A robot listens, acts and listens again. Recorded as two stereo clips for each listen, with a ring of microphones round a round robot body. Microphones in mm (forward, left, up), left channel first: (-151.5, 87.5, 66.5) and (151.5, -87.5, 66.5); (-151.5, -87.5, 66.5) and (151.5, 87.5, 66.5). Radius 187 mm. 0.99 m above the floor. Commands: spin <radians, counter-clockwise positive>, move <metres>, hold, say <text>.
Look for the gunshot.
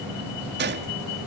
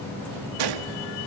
spin 0.52
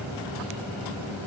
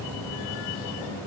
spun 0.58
say Facing where the gunshot came from. I can't hear it now.